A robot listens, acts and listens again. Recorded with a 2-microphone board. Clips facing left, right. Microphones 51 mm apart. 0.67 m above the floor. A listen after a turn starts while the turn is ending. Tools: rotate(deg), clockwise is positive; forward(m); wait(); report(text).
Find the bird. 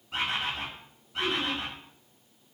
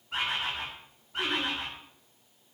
rotate(50)
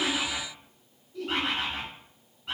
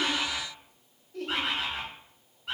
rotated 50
report("Facing the bird, 1 to 2 m away.")